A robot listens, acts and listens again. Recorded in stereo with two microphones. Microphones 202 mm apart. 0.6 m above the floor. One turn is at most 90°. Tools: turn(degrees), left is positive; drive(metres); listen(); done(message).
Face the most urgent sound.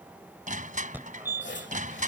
turn(degrees=-30)
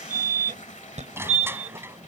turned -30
turn(degrees=-90)
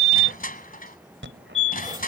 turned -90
turn(degrees=-85)
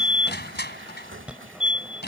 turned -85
done("Found it: a fire alarm, straight ahead.")